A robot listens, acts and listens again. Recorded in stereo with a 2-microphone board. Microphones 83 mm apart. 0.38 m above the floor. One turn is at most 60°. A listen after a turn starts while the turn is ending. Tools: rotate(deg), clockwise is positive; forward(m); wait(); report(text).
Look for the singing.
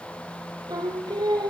rotate(55)
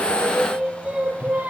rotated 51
rotate(20)
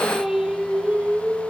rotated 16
rotate(15)
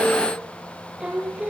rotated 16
rotate(15)
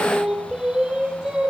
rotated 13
rotate(10)
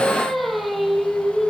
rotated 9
report("Found it: singing, straight ahead.")